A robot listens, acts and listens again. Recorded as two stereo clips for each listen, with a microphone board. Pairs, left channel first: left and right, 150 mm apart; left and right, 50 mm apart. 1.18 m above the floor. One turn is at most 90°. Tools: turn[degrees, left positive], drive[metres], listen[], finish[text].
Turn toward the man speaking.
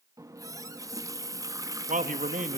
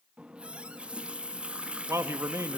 Thought: The man speaking: about 60° right or 120° right.
Action: turn[-60]
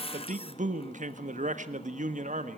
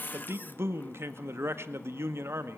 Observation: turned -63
Thought: So it is at 55° right.
Action: turn[-55]
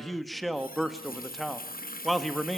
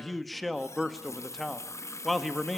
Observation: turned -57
Action: finish[Facing the man speaking.]